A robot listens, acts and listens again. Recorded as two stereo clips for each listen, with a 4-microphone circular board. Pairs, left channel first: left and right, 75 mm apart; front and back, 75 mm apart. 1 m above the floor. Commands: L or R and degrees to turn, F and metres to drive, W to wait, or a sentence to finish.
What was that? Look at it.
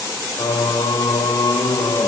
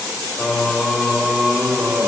L105
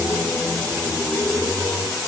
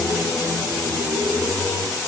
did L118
L30
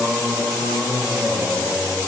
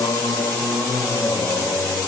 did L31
Facing the singing, 2 to 4 m away.